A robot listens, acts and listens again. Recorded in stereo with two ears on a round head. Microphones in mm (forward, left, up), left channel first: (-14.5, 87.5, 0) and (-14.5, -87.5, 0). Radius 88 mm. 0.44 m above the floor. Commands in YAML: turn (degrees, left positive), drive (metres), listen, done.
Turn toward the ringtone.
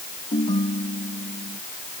turn: 25
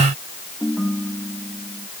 done: "Found it: a ringtone, straight ahead."